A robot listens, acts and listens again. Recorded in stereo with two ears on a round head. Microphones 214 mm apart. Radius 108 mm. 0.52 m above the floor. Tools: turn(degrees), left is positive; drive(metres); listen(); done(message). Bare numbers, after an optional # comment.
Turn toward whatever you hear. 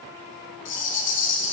# The rattle: about 50° left or 130° left.
turn(50)
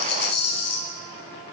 # So it is at 75° left.
turn(75)
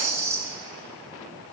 # The rattle is now 15° right.
turn(-15)
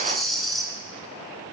done("Facing the rattle.")